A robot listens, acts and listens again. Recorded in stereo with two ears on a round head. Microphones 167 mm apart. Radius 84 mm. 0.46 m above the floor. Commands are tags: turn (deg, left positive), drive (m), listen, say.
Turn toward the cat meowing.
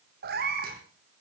<turn deg="-50"/>
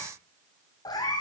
<turn deg="25"/>
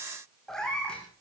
<say>Found it: a cat meowing, straight ahead, 2 to 4 m away.</say>